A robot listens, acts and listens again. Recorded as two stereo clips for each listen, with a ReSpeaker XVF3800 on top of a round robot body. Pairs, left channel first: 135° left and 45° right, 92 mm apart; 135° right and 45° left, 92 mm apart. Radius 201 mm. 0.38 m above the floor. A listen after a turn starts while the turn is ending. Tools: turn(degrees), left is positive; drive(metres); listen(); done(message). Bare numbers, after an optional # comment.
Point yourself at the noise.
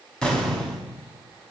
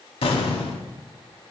# The explosion: 145° right.
turn(-145)
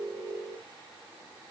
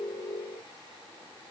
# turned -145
done("I heard an explosion from this way, but can't make it out now.")